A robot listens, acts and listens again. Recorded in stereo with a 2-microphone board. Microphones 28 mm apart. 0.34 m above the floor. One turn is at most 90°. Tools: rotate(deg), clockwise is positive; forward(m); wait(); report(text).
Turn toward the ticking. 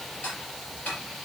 rotate(-65)
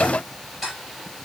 report("Facing the ticking.")